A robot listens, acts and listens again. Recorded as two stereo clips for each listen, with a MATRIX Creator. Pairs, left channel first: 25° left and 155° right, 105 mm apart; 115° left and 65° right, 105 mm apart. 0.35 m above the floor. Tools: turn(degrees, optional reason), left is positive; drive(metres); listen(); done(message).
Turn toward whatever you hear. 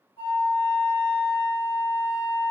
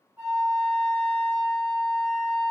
turn(degrees=10, reason="The flute: 10° left.")
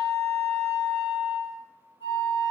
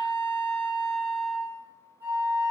done("Facing the flute, 1 to 2 m away.")